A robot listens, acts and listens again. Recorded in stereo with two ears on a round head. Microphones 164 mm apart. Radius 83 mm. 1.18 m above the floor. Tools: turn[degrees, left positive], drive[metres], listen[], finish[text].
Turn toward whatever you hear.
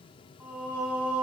Action: turn[-30]
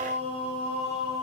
Thought: So it is at 140° right.
Action: turn[-140]
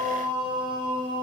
Thought: The singing is now 25° right.
Action: turn[-25]
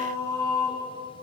Thought: The singing is now 15° left.
Action: turn[15]
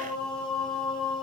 Action: finish[Found it: singing, straight ahead, over 4 m away.]